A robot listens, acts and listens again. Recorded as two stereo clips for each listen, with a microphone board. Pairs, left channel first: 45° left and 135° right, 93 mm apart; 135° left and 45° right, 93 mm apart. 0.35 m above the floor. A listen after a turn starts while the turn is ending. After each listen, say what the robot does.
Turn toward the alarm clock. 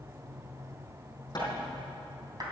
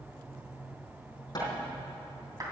Keep listening.
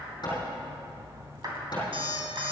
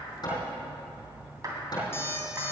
Turn 160° right.
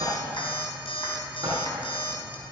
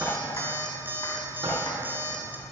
Turn 25° left.
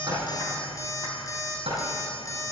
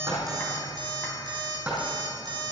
Turn 10° right.
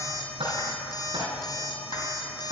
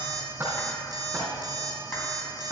Found it: an alarm clock, straight ahead, 1 to 2 m away.